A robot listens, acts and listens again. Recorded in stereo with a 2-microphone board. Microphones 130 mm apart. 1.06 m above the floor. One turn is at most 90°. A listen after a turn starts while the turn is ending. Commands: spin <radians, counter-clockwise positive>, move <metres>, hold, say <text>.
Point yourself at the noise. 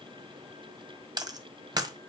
spin -0.52
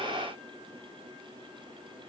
hold
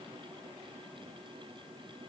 say I heard a dropped coin, but can't make it out now. It was about straight ahead or 120° right.